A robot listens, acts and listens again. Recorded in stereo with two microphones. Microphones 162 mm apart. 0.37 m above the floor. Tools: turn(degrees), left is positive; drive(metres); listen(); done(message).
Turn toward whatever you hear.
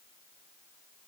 listen()
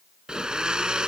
turn(degrees=-30)
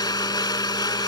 turn(degrees=25)
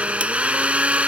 turn(degrees=-10)
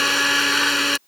done("Facing the blender.")